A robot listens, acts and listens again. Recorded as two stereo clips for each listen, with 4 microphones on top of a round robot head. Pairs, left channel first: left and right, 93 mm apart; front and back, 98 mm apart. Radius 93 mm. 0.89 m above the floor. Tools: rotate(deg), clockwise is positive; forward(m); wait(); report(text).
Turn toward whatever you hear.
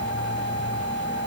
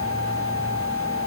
wait()
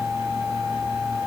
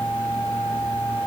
wait()
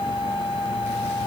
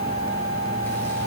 report("I can't make out anything.")